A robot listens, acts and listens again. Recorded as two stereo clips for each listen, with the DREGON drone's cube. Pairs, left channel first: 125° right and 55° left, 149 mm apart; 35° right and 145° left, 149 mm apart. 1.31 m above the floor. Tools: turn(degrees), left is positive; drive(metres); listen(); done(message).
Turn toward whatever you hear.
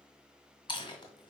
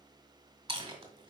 turn(degrees=-175)
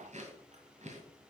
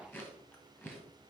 turn(degrees=35)
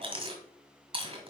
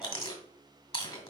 turn(degrees=10)
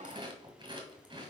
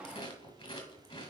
done("Found it: chewing, straight ahead, 1 to 2 m away.")